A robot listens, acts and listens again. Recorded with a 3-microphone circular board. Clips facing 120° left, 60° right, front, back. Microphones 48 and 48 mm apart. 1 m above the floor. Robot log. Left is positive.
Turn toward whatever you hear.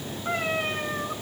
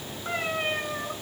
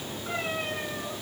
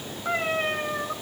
note: The cat meowing: 155° right.
cmd yaw -155
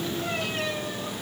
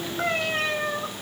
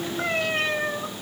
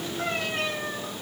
note: The cat meowing is now 55° right.
cmd yaw -55
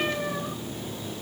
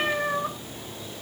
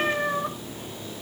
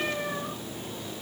note: The cat meowing is now 25° right.
cmd yaw -25
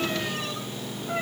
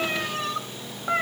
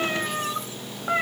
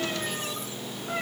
note: The cat meowing is now 30° right.
cmd yaw -30
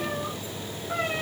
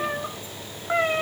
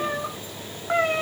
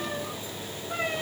note: The cat meowing is now 15° right.
cmd yaw -15
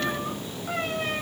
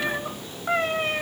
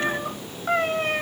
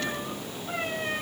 note: The cat meowing is now 10° right.
cmd yaw -10
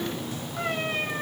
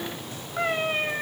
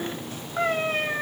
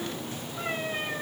end: Facing the cat meowing.